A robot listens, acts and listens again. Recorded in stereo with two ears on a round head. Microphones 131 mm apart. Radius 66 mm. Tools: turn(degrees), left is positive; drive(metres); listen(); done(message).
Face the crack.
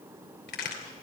turn(degrees=75)
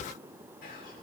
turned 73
listen()
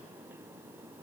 done("I heard a crack, but can't make it out now. It was about straight ahead or 35° left.")